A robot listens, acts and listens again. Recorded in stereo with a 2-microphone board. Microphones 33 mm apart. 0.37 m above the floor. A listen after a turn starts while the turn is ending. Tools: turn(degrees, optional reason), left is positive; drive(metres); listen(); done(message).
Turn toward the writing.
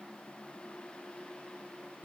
listen()
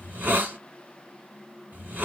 listen()
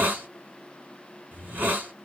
done("I can't make out writing to turn to.")